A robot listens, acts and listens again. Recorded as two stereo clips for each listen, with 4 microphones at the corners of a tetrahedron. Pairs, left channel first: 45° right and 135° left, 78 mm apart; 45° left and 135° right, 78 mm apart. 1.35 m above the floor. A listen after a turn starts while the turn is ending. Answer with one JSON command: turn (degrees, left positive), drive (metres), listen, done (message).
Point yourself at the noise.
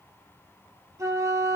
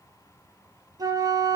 {"turn": -170}
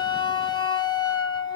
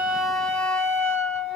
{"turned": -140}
{"turn": -30}
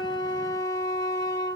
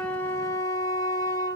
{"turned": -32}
{"done": "Found it: a flute, straight ahead."}